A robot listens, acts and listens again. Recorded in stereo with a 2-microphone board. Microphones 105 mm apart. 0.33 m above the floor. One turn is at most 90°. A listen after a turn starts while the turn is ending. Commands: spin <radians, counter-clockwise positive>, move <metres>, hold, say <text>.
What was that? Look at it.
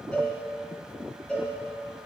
spin 0.52
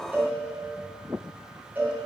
spin -0.35
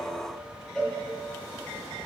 say Found it: a cowbell, straight ahead.